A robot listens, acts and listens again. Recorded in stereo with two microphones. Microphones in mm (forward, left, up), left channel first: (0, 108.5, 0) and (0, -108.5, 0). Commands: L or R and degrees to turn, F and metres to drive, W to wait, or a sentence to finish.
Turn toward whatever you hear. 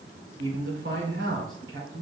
R65
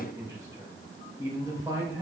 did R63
R15
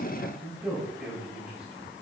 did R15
Facing the man speaking.